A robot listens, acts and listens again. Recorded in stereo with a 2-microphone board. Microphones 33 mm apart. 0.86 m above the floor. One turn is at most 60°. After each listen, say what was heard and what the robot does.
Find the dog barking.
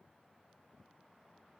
Keep listening.
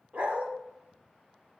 The dog barking: about 50° right or 130° right. Turn 50° right.
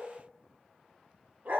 So it is at 75° right. Turn 60° right.
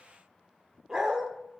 The dog barking is now 20° right. Turn 20° right.
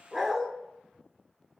Found it: a dog barking, straight ahead.